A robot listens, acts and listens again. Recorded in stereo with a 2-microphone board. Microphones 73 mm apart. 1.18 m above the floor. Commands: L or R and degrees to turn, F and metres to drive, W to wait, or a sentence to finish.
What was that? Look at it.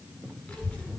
L30
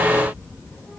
L145
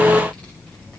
L20
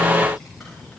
Found it: a child speaking, straight ahead, over 4 m away.